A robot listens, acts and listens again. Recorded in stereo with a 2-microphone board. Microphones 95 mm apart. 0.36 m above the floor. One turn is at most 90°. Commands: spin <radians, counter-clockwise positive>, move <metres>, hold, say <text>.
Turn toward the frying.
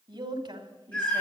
hold
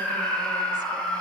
hold
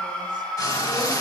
spin 0.70
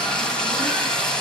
spin 0.17
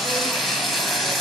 say Facing the frying, 2 to 4 m away.